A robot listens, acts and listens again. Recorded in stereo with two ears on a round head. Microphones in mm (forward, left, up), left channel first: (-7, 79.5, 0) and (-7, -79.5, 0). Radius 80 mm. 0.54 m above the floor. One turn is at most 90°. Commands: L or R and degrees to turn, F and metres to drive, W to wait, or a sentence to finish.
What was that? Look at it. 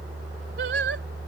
R70
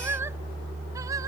R20
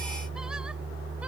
W
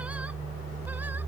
W
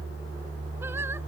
Facing where the singing came from. I can't hear it now.